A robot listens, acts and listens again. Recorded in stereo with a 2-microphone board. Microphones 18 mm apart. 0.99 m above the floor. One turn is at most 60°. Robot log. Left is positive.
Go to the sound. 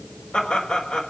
note: The laughter: about 65° left or 115° left.
cmd yaw +60
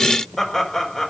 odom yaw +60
note: So it is at 10° left.
cmd yaw +10
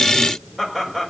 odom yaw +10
cmd fwd 1.0
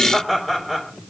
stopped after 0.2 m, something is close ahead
note: The laughter is now 15° right.
cmd yaw -15
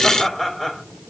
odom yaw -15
end: Blocked. The laughter is further on, straight ahead.